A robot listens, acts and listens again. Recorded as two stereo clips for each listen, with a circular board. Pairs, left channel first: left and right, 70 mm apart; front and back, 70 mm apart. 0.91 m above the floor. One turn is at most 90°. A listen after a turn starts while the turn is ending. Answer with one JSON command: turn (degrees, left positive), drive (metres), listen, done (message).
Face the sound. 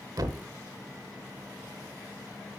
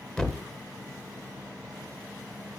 {"turn": -80}
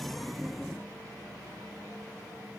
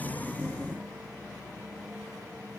{"done": "I heard a thud from this way, but can't make it out now."}